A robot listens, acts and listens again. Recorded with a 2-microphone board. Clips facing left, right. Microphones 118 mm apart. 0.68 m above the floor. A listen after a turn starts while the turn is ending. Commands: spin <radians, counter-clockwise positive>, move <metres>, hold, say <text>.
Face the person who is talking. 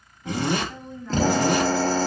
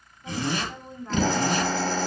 spin -0.70
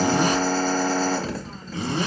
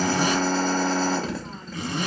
hold
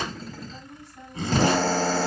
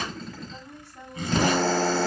spin -1.75
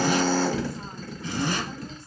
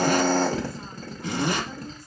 hold
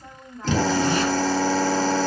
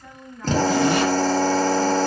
spin 0.52
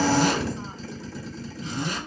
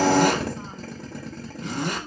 hold
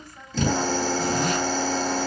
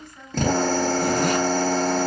spin 0.26
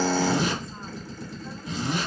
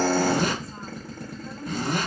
hold
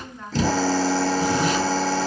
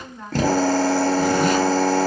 say Facing the woman speaking.